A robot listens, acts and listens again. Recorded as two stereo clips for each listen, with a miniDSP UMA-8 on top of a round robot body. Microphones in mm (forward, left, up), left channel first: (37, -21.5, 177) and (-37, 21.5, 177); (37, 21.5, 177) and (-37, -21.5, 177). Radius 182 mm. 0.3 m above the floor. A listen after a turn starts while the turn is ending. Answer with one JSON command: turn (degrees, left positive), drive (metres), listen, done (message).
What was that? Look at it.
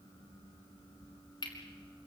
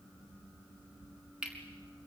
{"turn": -70}
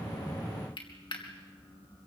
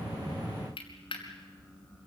{"done": "Facing the cutlery clinking."}